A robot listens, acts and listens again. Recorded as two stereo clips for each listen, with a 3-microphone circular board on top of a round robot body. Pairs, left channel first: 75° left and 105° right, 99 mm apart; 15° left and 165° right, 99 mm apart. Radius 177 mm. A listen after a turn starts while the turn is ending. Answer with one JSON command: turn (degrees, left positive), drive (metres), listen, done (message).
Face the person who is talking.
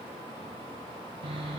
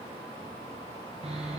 {"listen": true}
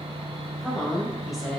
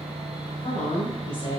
{"turn": -20}
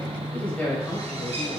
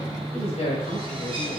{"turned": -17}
{"done": "Facing the woman speaking, 2 to 4 m away."}